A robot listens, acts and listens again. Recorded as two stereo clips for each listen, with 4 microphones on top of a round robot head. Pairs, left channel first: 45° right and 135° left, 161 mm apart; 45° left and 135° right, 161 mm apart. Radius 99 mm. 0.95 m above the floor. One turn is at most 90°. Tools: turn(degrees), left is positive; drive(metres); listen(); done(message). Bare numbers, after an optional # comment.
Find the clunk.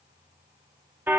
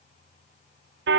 listen()
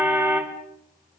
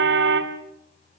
listen()
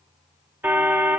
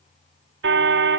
done("I can't make out a clunk to turn to.")